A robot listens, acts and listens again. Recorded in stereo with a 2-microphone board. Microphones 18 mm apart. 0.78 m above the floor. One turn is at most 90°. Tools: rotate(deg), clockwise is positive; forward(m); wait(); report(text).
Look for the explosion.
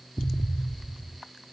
rotate(-30)
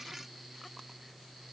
wait()
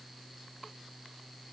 report("I heard an explosion, but can't make it out now. It was about 20° right or 140° left.")